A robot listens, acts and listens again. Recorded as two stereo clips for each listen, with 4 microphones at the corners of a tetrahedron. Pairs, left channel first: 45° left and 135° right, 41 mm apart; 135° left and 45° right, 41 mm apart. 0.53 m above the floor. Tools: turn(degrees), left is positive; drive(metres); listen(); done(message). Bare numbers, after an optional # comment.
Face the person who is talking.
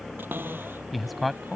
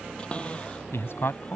# The man speaking: 135° left.
turn(135)
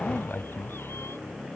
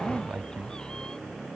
done("Facing the man speaking.")